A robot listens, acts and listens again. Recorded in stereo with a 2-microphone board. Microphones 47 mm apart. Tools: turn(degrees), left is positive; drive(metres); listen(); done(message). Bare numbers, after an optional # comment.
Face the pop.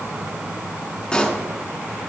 # The pop: about 20° left or 160° left.
turn(20)
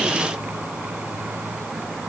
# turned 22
listen()
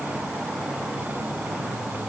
done("I heard a pop, but can't make it out now. It was about 5° right or 140° left.")